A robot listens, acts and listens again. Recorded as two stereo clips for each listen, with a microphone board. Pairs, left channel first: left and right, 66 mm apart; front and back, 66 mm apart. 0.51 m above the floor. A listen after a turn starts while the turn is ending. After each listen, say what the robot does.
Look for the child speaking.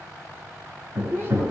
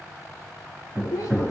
Turn 35° right.
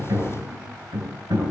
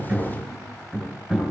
Keep listening.
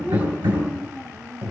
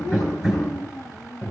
Turn 35° right.
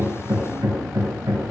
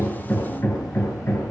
Keep listening.
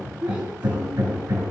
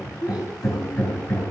Turn 15° right.
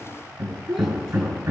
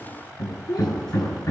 Facing the child speaking.